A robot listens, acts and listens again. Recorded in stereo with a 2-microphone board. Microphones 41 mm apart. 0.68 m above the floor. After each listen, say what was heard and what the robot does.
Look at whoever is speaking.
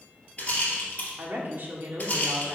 The woman speaking: about 50° right or 130° right. Turn 50° right.
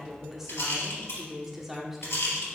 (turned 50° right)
Found it: a woman speaking, straight ahead.